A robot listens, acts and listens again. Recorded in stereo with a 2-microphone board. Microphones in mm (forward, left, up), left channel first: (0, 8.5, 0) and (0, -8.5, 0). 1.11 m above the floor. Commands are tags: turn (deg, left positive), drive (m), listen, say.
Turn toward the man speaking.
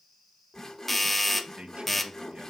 <turn deg="-90"/>
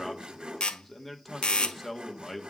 <turn deg="15"/>
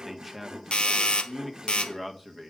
<say>Facing the man speaking.</say>